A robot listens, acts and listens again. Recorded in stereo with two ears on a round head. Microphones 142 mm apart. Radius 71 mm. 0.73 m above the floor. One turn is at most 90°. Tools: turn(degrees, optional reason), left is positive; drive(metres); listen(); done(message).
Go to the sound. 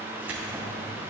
turn(degrees=-30)
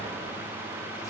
listen()
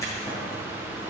turn(degrees=20, reason="So it is at 20° left.")
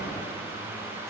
listen()
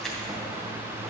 drive(metres=1.0)
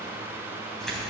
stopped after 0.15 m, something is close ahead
done("Something is in my way. I am facing the keys jangling but have not reached it.")